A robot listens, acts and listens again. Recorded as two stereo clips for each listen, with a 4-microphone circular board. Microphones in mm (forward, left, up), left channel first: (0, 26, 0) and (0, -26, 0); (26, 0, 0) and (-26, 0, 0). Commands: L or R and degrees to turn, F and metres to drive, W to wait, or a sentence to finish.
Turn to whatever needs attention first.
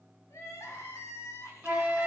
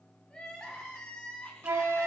L75
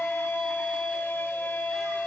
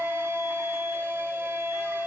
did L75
W
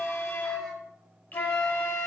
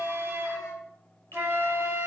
W
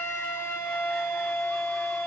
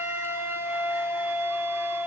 I heard crying from this way, but can't make it out now.